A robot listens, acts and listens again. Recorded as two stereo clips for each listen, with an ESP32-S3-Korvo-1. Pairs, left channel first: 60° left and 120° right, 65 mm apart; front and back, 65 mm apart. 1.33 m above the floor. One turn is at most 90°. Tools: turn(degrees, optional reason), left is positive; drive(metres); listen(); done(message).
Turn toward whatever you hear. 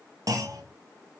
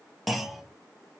turn(degrees=-90, reason="The clunk: 90° right.")
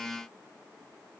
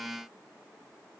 done("I heard a clunk from this way, but can't make it out now.")